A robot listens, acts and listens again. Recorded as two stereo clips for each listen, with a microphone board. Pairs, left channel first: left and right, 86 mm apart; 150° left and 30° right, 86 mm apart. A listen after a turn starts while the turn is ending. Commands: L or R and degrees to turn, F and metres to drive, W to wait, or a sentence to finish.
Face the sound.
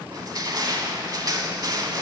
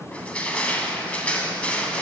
R135
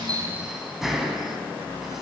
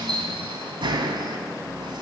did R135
Facing the crushing, under 1 m away.